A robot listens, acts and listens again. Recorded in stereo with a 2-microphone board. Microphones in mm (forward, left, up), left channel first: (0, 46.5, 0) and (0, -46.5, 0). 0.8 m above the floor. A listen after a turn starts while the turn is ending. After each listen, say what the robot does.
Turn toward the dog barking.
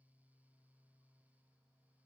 Keep listening.
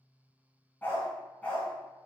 Turn 30° left.
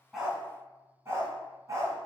Turn 35° right.
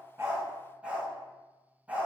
Turn 15° right.
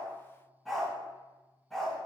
Found it: a dog barking, straight ahead, 2 to 4 m away.